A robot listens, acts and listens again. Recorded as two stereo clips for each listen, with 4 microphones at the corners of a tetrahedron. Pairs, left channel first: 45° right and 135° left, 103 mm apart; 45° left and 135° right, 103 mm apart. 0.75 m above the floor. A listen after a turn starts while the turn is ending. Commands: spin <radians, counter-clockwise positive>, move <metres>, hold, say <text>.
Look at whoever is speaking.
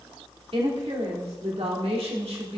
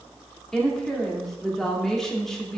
spin 2.27
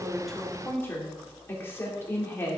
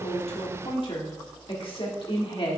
spin 0.35
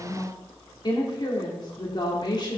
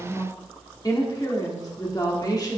say Found it: a woman speaking, straight ahead.